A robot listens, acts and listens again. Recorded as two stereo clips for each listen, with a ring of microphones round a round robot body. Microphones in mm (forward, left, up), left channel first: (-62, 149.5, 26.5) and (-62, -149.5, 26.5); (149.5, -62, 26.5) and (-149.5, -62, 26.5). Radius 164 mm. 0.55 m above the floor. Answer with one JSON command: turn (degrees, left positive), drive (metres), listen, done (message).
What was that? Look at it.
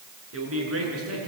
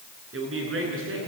{"turn": -130}
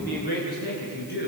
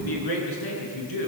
{"turn": 30}
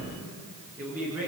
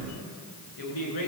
{"done": "Found it: a man speaking, straight ahead, over 4 m away."}